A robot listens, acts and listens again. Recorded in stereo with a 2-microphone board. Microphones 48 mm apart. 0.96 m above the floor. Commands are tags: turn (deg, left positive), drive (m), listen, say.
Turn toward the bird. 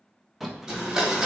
<turn deg="-30"/>
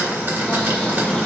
<turn deg="25"/>
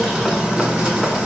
<say>Facing the bird, under 1 m away.</say>